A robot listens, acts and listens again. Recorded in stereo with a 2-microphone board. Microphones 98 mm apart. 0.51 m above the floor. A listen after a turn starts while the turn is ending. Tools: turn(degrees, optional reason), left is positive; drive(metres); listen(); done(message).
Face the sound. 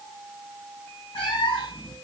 turn(degrees=90)
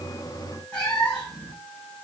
turn(degrees=10, reason="So it is at 10° left.")
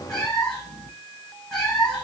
turn(degrees=10, reason="The cat meowing is now 10° left.")
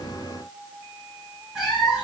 done("Facing the cat meowing, 1 to 2 m away.")